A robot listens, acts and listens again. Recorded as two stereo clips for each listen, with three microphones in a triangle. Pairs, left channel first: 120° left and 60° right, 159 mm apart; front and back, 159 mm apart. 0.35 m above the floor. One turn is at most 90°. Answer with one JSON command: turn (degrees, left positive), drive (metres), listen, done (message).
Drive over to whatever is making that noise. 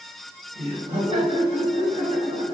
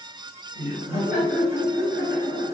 {"turn": -15}
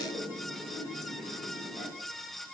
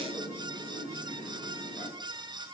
{"drive": 1.0}
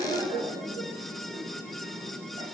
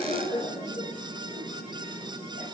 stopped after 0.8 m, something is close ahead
{"turn": -15}
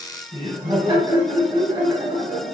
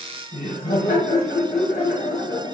{"done": "I am next to the laughter."}